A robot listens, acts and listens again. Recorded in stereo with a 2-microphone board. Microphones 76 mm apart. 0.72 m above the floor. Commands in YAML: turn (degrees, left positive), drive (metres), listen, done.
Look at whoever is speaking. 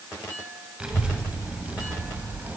turn: -30
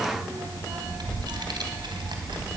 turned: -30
turn: -95
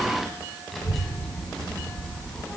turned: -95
turn: 10
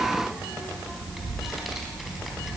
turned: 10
done: "Found it: a child speaking, straight ahead."